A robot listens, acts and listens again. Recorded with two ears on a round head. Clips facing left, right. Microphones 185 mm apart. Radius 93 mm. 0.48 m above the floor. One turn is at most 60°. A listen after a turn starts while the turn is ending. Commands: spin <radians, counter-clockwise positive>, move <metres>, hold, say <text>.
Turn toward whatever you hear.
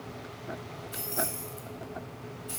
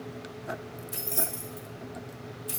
spin -1.05
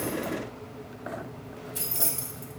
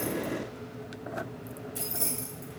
say Facing the keys jangling, 1 to 2 m away.